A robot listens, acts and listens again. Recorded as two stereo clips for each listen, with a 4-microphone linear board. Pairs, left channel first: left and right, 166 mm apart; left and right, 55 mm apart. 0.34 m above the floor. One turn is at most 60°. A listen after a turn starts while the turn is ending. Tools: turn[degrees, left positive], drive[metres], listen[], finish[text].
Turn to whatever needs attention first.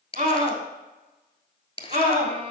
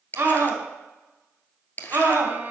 Thought: The scream: about 45° right or 135° right.
Action: turn[-45]
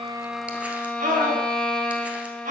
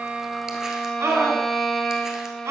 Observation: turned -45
Thought: So it is at 85° right.
Action: turn[-60]
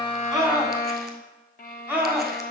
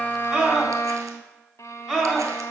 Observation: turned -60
Thought: The scream is now 15° right.
Action: turn[-15]
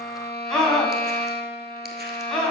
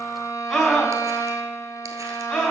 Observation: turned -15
Action: finish[Found it: a scream, straight ahead, 2 to 4 m away.]